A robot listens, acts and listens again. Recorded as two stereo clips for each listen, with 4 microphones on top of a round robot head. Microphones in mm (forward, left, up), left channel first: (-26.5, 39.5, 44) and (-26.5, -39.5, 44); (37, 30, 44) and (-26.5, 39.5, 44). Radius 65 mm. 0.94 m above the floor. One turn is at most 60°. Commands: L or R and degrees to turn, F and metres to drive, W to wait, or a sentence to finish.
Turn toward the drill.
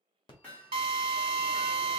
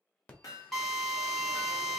R60
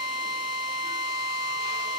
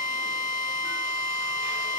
R50
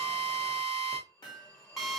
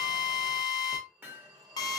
Found it: a drill, straight ahead.